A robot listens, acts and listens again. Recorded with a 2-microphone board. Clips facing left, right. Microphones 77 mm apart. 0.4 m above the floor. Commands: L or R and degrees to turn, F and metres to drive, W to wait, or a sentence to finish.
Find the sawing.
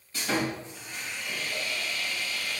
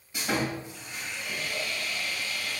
R30
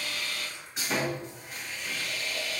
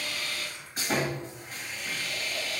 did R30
R135
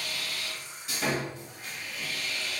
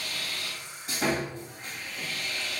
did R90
R45
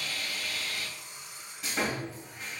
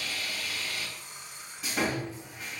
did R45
Facing the sawing, 1 to 2 m away.